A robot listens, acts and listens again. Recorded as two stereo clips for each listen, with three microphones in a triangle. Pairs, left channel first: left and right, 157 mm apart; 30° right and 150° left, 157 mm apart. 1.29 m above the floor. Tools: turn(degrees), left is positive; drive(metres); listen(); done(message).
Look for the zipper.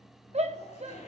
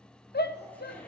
turn(degrees=50)
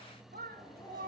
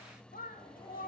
listen()
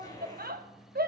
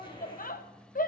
turn(degrees=25)
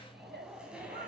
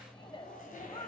done("Found it: a zipper, straight ahead.")